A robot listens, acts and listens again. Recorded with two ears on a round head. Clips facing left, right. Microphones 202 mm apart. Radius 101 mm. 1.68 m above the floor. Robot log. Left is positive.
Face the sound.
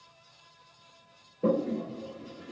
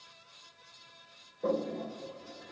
note: The toilet flushing: about 35° left or 145° left.
cmd yaw +35
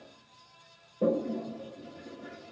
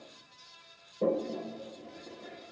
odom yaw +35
end: Found it: a toilet flushing, straight ahead, 1 to 2 m away.